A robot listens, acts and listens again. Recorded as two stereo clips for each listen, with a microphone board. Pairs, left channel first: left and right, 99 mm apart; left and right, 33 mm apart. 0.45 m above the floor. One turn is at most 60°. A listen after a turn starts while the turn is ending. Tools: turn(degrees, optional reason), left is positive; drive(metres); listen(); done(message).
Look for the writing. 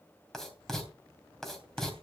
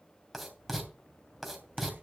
turn(degrees=30)
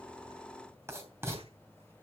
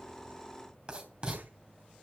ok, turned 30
turn(degrees=-30, reason="So it is at 30° right.")
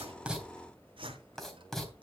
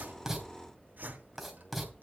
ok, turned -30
done("Facing the writing.")